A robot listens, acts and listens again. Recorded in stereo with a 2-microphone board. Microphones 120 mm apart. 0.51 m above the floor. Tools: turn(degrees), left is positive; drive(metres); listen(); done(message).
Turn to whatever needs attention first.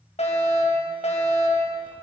turn(degrees=65)
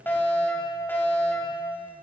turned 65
turn(degrees=15)
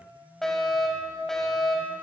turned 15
done("Found it: a fire alarm, straight ahead.")